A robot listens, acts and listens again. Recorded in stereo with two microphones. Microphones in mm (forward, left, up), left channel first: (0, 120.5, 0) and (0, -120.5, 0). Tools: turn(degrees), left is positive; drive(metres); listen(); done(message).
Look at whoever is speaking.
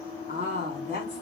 turn(degrees=-25)
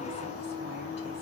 listen()
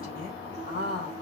turn(degrees=-35)
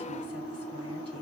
listen()
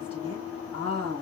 turn(degrees=-120)
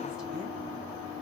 listen()
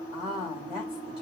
done("Facing the woman speaking, over 4 m away.")